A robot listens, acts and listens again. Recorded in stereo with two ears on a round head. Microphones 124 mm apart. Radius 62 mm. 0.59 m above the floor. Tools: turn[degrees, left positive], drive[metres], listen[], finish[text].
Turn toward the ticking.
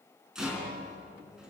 Action: listen[]
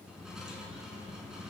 Action: listen[]
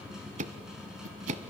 Thought: The ticking: about 55° right or 125° right.
Action: turn[-55]
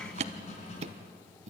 Thought: So it is at 55° right.
Action: turn[-55]
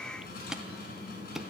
Action: finish[Facing the ticking, under 1 m away.]